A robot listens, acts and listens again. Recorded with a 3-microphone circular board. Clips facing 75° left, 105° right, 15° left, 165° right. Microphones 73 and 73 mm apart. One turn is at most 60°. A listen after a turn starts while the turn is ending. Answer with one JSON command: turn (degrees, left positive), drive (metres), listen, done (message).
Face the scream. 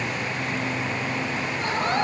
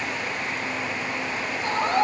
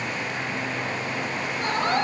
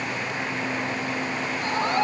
{"turn": 50}
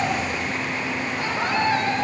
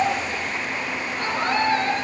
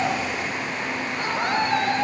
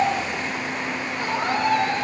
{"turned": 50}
{"turn": -10}
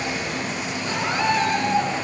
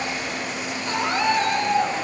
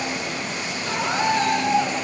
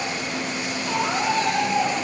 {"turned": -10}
{"done": "Facing the scream."}